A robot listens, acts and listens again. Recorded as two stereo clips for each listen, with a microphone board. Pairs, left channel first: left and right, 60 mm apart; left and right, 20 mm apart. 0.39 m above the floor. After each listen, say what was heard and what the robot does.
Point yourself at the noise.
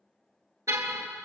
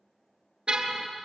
The car horn: about 60° right or 120° right. Turn 60° right.
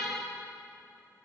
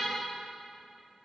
Found it: a car horn, straight ahead.